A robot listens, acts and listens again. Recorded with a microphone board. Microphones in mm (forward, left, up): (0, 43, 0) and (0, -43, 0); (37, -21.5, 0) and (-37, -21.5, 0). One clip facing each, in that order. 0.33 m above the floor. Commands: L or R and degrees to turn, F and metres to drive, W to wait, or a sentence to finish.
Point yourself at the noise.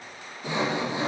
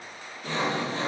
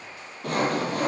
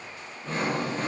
L15
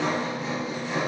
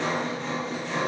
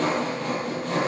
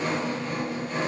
Found it: sawing, straight ahead, 2 to 4 m away.